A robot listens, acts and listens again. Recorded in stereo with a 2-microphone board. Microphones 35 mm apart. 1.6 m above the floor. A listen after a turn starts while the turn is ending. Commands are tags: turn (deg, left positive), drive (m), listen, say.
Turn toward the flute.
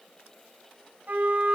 <turn deg="-70"/>
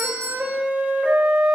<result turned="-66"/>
<turn deg="-45"/>
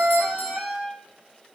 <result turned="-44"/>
<say>Found it: a flute, straight ahead.</say>